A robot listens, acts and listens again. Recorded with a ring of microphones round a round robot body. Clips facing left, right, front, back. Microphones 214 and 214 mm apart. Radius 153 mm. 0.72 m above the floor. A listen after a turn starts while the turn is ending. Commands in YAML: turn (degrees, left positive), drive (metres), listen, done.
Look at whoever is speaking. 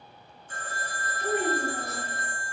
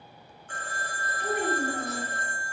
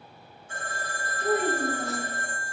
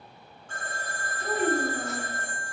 turn: -30
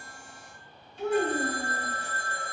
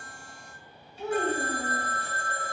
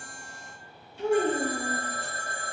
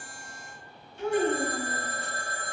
done: "Facing the child speaking."